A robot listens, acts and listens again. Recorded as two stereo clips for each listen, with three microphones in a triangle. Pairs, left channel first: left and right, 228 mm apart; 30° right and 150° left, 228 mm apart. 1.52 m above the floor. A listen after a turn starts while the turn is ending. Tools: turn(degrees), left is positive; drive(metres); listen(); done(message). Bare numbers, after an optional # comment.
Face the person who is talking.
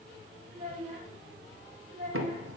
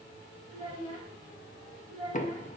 # The child speaking: 145° right.
turn(-145)
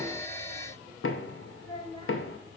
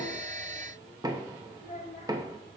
# The child speaking is now 20° left.
turn(20)
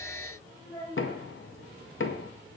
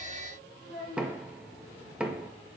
done("Found it: a child speaking, straight ahead, 2 to 4 m away.")